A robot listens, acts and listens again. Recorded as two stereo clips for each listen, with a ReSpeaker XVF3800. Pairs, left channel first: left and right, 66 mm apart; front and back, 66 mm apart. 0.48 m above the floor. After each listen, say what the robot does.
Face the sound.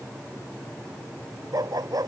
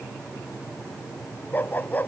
Turn 65° right.
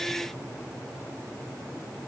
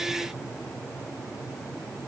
Keep listening.
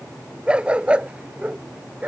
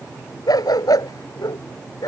Turn 20° right.
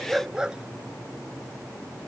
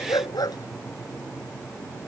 Turn 10° right.
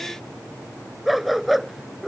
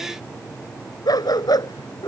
Found it: a dog barking, straight ahead.